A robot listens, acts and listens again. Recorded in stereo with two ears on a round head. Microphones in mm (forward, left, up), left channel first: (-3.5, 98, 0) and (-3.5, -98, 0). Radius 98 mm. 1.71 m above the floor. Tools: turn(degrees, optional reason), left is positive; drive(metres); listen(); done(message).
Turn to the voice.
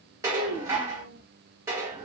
turn(degrees=45, reason="The child speaking: about 45° left or 135° left.")
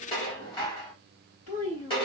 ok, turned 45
turn(degrees=90, reason="So it is at 90° left.")
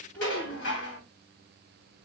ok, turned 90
done("Found it: a child speaking, straight ahead.")